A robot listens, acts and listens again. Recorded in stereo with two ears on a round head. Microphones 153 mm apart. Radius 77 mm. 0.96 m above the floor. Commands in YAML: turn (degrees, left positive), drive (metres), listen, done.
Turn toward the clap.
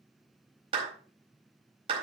turn: -30
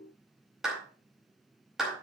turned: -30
done: "Found it: a clap, straight ahead, over 4 m away."